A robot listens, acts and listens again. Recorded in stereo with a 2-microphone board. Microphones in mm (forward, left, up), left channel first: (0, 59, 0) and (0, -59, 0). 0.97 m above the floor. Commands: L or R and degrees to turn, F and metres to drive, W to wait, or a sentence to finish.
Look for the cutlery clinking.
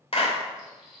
R30
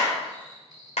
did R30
R145
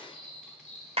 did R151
Facing the cutlery clinking.